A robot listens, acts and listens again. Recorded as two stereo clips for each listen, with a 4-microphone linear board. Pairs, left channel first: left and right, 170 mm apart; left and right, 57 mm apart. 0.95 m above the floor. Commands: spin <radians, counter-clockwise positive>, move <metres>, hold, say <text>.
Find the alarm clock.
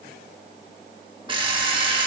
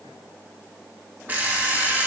spin -0.52
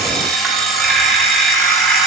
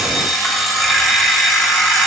say Found it: an alarm clock, straight ahead.